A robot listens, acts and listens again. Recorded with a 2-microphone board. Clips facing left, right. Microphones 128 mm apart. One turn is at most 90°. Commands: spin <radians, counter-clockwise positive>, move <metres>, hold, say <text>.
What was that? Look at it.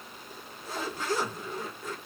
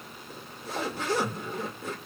spin -1.13
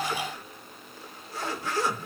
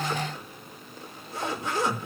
spin -0.35
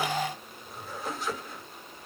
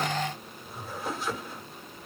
say Facing the zipper, 1 to 2 m away.